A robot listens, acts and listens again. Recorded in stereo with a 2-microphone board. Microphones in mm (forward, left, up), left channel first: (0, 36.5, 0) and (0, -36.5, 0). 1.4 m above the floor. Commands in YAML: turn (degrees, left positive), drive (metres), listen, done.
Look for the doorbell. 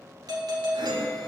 turn: -60
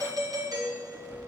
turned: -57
turn: -60
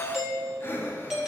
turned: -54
done: "Found it: a doorbell, straight ahead."